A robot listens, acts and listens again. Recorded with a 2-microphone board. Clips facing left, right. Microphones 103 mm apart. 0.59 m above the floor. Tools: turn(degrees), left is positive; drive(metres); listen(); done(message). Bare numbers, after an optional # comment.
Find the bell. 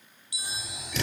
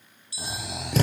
# The bell: about 20° left or 160° left.
turn(20)
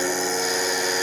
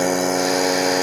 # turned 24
listen()
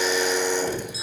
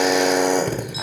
listen()
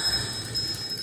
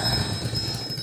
done("I heard a bell, but can't make it out now. It was about 5° right or 140° left.")